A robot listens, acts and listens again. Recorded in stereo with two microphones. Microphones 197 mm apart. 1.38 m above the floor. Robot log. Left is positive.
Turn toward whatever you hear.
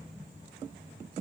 cmd idle
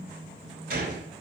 note: The gunshot: about 50° right or 130° right.
cmd yaw -50
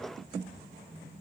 cmd idle
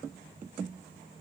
end: I heard a gunshot, but can't make it out now. It was about straight ahead or 80° right.